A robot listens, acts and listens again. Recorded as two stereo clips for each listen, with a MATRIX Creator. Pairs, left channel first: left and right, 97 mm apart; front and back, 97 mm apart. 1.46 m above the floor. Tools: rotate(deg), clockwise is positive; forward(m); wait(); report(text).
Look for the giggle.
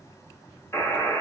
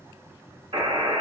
wait()
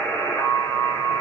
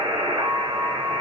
wait()
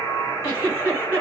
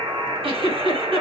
rotate(165)
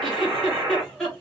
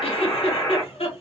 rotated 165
report("Facing the giggle.")